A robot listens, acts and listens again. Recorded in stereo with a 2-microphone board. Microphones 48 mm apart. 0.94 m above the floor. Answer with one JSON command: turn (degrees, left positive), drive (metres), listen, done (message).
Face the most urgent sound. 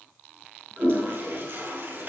{"listen": true}
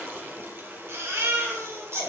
{"turn": -75}
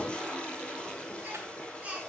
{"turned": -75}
{"turn": -30}
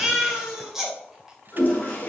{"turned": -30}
{"turn": -10}
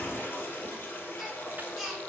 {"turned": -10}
{"done": "Found it: a baby crying, straight ahead, 2 to 4 m away."}